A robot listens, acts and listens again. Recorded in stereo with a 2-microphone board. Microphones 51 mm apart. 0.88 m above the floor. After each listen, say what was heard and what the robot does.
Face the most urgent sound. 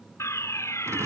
The fire alarm: about 70° left or 110° left. Turn 70° left.
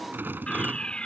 So it is at 20° left. Turn 20° left.
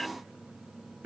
Keep listening.
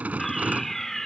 Found it: a fire alarm, straight ahead.